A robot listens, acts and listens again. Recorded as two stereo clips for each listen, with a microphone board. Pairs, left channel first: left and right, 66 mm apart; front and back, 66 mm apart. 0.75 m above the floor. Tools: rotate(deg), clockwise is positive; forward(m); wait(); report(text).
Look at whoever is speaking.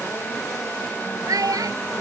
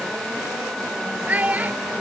rotate(115)
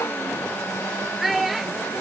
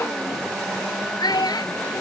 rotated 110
report("Found it: a child speaking, straight ahead.")